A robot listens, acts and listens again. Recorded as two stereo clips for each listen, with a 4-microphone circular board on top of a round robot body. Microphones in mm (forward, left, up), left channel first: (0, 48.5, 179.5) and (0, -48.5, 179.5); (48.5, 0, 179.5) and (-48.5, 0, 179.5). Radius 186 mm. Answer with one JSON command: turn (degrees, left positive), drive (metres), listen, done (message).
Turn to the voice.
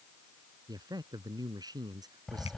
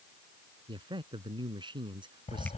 {"turn": -140}
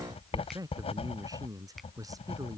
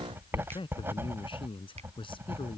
{"turn": -35}
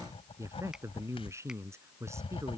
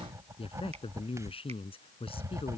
{"turn": -25}
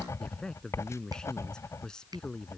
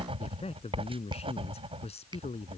{"turn": 10}
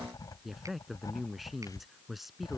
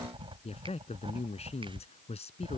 {"done": "Facing the man speaking."}